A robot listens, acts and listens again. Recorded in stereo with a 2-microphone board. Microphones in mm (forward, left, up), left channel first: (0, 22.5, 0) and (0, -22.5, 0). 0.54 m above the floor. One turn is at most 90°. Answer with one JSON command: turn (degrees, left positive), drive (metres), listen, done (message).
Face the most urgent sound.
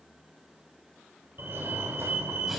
{"turn": -60}
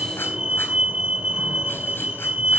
{"turn": -25}
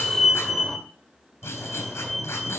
{"done": "Facing the fire alarm."}